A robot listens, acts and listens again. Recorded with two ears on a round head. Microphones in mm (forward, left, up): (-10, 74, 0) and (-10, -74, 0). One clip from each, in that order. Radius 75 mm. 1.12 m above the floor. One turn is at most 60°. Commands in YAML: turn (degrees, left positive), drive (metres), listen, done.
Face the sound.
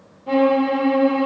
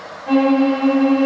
turn: -40
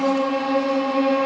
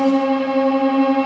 done: "Found it: a violin, straight ahead."